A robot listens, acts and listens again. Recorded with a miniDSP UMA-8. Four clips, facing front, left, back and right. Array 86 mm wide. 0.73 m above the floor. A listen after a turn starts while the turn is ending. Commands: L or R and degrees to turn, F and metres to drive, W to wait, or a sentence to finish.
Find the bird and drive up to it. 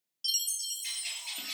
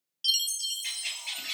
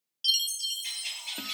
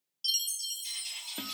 L95
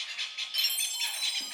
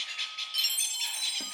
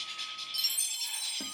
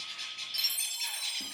F1.0
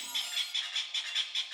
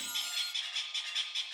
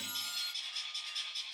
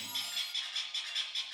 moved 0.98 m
F1.0
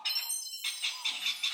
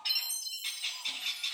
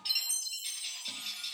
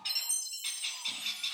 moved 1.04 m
F1.0
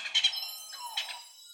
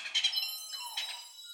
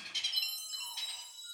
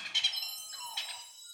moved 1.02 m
F1.0
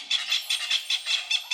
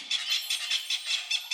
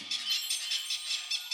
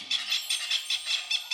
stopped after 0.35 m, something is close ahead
I am next to the bird.